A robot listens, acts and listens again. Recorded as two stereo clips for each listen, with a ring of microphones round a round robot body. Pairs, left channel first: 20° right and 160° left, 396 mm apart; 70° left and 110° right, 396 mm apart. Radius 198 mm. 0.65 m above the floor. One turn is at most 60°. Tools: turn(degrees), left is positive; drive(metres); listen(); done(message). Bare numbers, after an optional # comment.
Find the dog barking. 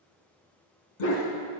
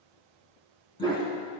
# The dog barking: 10° right.
turn(-10)
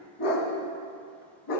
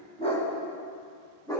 # The dog barking is now 15° right.
turn(-15)
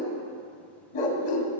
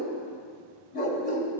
done("Found it: a dog barking, straight ahead, 2 to 4 m away.")